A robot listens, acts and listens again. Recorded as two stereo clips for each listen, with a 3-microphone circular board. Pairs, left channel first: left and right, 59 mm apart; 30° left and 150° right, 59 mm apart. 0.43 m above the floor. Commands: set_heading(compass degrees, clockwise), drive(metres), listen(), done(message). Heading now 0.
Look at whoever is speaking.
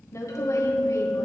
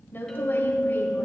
set_heading(280)
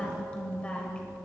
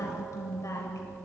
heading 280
set_heading(260)
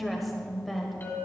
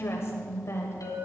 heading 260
done("Found it: a woman speaking, straight ahead.")